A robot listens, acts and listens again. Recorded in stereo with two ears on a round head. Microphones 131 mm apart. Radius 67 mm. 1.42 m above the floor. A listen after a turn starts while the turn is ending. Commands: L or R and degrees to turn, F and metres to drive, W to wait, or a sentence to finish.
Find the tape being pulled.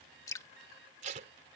R50
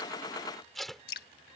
Found it: tape being pulled, straight ahead.